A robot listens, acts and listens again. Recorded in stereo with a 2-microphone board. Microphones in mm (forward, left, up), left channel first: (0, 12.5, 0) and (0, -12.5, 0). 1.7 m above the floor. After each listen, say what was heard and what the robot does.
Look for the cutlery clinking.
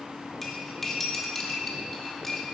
Turn 30° left.
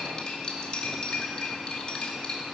So it is at 140° left. Turn 140° left.
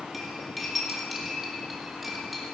Found it: cutlery clinking, straight ahead, 2 to 4 m away.